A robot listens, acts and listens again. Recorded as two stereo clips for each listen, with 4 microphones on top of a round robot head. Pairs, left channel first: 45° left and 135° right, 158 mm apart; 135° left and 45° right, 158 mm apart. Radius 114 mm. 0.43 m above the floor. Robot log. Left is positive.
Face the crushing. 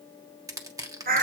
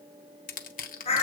note: The crushing: 160° left.
cmd yaw +160
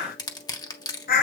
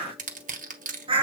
note: The crushing is now 20° right.
cmd yaw -20
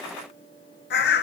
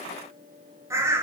cmd idle
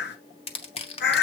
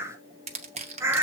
end: Facing the crushing, 1 to 2 m away.